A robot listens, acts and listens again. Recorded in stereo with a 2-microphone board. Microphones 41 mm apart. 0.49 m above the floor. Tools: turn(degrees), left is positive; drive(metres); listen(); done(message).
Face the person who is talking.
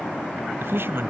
turn(degrees=-70)
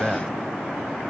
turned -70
turn(degrees=-20)
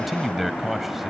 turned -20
done("Found it: a man speaking, straight ahead.")